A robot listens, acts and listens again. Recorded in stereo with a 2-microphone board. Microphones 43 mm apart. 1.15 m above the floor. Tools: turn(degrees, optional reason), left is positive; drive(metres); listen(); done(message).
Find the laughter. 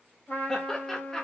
turn(degrees=30)
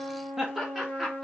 done("Facing the laughter.")